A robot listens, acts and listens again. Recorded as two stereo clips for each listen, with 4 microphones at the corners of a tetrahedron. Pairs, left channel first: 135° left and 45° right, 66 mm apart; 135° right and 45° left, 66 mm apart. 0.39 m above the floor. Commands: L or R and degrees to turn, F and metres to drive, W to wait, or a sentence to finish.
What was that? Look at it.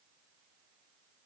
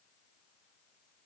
W
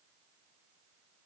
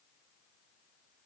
W
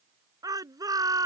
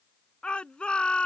R60
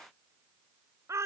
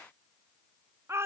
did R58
Facing the shout.